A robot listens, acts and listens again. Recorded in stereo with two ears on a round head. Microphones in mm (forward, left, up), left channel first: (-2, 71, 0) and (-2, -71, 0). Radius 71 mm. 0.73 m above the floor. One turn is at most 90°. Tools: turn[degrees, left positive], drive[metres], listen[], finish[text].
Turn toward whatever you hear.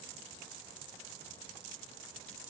Action: listen[]
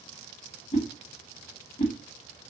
Thought: The whoosh: about 40° left or 140° left.
Action: turn[40]
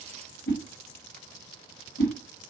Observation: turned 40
Thought: So it is at 95° left.
Action: turn[90]
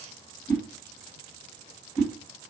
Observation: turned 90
Thought: The whoosh is now 10° left.
Action: turn[10]
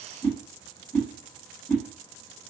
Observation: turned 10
Action: finish[Facing the whoosh, 2 to 4 m away.]